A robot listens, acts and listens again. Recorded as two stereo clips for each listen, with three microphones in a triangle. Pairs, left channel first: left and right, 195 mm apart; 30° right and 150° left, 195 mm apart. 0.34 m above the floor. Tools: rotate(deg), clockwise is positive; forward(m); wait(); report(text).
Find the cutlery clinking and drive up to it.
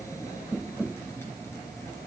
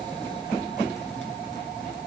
wait()
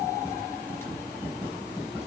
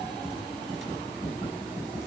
wait()
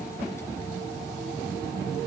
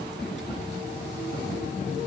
report("I can't make out cutlery clinking.")